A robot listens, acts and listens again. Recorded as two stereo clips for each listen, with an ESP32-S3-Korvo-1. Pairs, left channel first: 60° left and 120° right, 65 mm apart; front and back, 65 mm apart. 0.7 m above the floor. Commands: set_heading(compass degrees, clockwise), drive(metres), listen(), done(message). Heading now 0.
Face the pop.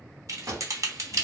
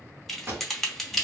set_heading(135)
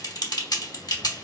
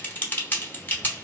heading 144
set_heading(134)
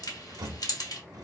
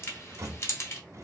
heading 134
done("I heard a pop from this way, but can't make it out now.")